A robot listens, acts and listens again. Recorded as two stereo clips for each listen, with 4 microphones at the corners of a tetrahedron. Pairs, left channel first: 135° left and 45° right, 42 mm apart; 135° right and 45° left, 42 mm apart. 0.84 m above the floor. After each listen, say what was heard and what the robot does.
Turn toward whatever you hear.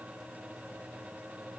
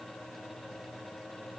Keep listening.
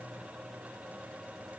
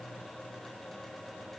Keep listening.
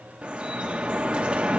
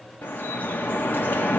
The dripping: 105° right. Turn 105° right.
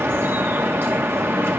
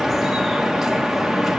The dripping is now 40° right. Turn 40° right.
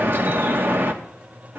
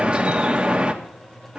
The dripping is now 20° right. Turn 20° right.
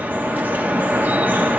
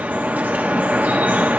Found it: dripping, straight ahead, 1 to 2 m away.